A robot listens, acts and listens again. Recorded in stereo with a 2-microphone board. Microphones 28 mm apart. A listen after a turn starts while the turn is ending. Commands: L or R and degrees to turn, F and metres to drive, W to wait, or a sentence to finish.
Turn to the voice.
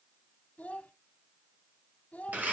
L60
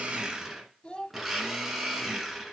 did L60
L45
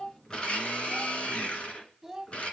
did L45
Facing the child speaking, 1 to 2 m away.